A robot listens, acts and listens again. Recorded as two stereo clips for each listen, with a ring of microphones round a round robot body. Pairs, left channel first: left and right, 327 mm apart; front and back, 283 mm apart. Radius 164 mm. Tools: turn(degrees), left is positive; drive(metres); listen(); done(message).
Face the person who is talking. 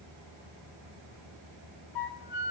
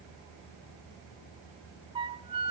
listen()
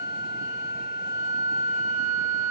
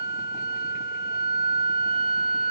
listen()
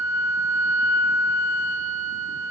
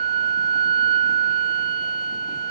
done("I can't make out anyone speaking to turn to.")